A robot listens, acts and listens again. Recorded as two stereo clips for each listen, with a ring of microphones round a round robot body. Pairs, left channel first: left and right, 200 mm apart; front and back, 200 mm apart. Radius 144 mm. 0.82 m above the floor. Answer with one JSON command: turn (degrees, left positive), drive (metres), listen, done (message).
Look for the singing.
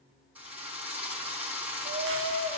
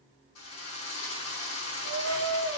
{"turn": -135}
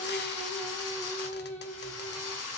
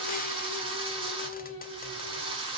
{"turn": 10}
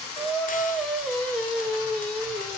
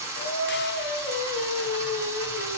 {"done": "Facing the singing, 2 to 4 m away."}